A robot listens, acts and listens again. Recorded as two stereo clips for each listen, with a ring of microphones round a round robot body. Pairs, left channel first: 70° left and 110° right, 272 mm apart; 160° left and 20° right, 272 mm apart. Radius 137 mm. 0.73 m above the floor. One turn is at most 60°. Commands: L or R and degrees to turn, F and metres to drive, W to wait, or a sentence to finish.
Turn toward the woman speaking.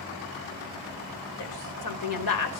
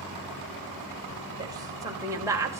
L60
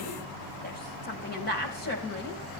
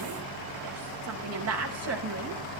L15
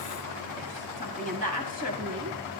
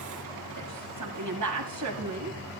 Found it: a woman speaking, straight ahead, over 4 m away.